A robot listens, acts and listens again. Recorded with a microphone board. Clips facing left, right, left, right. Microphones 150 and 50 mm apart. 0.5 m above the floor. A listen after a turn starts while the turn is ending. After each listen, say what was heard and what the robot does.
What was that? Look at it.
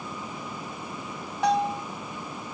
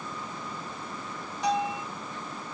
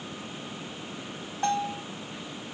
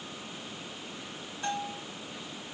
The bell: about 60° left or 120° left. Turn 60° left.
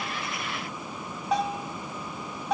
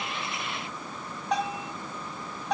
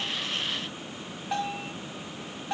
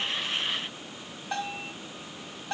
Found it: a bell, straight ahead, 2 to 4 m away.